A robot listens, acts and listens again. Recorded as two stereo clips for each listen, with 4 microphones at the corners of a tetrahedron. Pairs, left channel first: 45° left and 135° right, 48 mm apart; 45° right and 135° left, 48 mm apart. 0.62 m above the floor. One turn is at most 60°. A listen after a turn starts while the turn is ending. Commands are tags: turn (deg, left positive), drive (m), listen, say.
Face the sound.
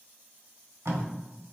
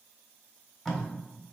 <turn deg="-60"/>
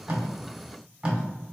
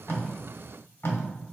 <turn deg="-60"/>
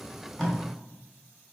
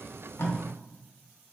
<turn deg="-10"/>
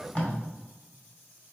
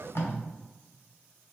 <turn deg="-15"/>
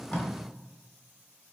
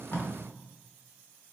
<listen/>
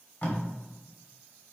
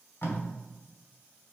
<say>Found it: tape being pulled, straight ahead, 1 to 2 m away.</say>